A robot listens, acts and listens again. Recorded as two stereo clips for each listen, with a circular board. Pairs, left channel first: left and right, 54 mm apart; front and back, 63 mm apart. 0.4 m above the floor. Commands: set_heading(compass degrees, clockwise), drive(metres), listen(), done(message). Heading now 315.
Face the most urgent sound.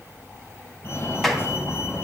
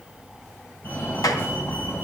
set_heading(265)
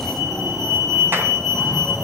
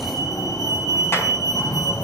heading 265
done("Found it: a fire alarm, straight ahead, over 4 m away.")